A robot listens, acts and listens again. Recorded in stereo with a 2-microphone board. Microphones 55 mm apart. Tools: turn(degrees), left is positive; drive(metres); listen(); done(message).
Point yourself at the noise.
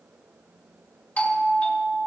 turn(degrees=25)
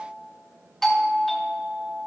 done("Facing the doorbell.")